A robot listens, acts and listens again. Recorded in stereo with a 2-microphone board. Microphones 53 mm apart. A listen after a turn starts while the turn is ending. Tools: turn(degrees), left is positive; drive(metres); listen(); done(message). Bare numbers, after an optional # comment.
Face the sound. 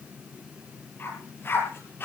# The dog barking: about 40° left or 140° left.
turn(40)
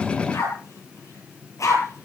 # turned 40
# So it is at 105° left.
turn(105)
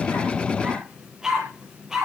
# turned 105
# The dog barking is now 10° right.
turn(-10)
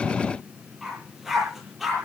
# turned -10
done("Found it: a dog barking, straight ahead.")